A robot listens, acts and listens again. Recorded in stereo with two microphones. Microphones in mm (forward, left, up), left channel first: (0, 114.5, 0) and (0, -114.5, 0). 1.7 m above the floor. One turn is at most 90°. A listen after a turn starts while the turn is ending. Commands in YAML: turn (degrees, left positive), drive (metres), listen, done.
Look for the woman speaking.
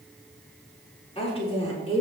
turn: 30
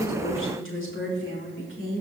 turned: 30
turn: 90
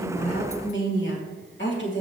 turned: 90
turn: 50
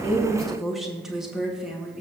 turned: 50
done: "Facing the woman speaking, 2 to 4 m away."